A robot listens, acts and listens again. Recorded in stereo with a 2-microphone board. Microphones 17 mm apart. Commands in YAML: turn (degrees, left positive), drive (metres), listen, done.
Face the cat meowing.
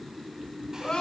listen: true
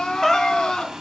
turn: 20
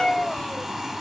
turn: 130
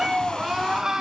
turn: -30
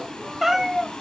turn: -10
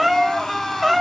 done: "Facing the cat meowing, 2 to 4 m away."